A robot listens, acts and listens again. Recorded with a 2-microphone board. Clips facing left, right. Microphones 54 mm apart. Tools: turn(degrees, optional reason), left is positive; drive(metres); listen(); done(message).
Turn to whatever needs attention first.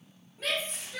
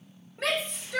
turn(degrees=-90)
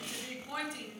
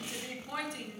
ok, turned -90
done("Found it: a shout, straight ahead, 1 to 2 m away.")